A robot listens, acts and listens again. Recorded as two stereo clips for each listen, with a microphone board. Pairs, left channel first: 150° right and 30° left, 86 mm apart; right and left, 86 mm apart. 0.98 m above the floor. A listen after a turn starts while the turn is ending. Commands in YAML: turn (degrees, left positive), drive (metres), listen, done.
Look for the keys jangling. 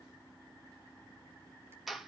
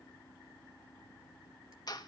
listen: true
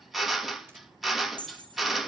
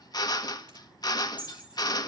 turn: 15
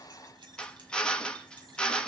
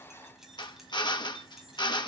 listen: true
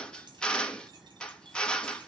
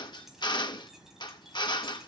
listen: true
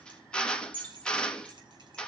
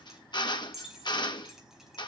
done: "Facing the keys jangling."